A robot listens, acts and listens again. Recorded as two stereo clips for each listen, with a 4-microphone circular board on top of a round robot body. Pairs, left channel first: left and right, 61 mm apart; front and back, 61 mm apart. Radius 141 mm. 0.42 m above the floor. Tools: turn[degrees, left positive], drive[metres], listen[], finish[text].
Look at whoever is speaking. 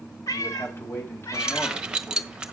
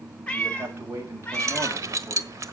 Thought: The man speaking: 140° left.
Action: turn[140]
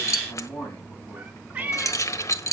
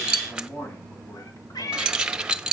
Thought: The man speaking is now 45° left.
Action: turn[45]
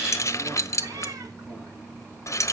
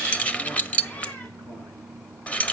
Action: listen[]
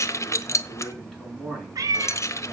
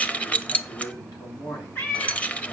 Action: finish[Found it: a man speaking, straight ahead, over 4 m away.]